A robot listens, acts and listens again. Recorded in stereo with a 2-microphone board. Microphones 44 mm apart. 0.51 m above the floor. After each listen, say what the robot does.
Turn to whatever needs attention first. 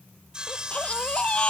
Turn 25° left.
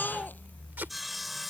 Turn 130° left.
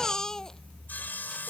Turn 15° left.
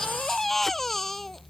Facing the baby crying.